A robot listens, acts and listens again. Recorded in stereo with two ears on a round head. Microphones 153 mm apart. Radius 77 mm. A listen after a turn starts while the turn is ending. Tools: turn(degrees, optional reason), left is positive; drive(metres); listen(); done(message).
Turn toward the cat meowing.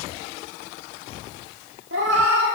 turn(degrees=-90)
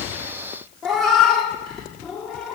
done("Facing the cat meowing.")